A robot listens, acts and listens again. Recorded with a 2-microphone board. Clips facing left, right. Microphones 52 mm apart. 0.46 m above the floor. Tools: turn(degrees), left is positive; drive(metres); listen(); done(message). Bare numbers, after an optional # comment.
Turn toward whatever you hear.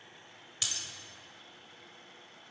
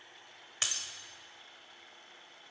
# The breaking glass: about 40° right or 140° right.
turn(-40)
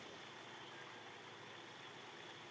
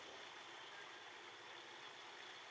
listen()
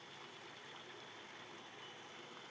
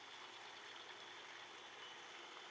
done("I heard breaking glass, but can't make it out now. It was about straight ahead or 100° right.")